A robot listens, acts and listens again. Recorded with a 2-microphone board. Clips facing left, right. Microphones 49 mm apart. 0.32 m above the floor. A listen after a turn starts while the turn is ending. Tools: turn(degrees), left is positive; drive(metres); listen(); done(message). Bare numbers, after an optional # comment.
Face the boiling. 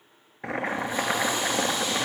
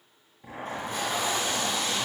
turn(90)
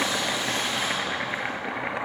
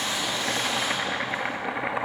done("Found it: boiling, straight ahead, 1 to 2 m away.")